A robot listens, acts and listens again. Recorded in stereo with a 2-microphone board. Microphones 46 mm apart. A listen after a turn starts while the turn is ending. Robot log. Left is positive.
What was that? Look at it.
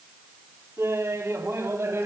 note: The laughter: about 70° right or 110° right.
cmd yaw -70
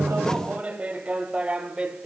note: So it is at 20° right.
cmd yaw -20
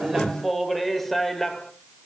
note: The laughter is now 10° left.
cmd yaw +10
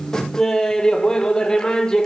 note: The laughter is now 15° left.
cmd yaw +15
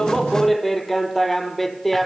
end: Facing the laughter.